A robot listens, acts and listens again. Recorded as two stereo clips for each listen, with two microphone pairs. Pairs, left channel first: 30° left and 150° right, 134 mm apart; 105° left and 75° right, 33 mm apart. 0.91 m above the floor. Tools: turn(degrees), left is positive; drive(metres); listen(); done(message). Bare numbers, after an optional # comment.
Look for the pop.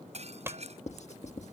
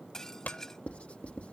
# The pop: 140° left.
turn(140)
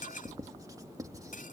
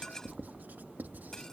done("I heard a pop from this way, but can't make it out now.")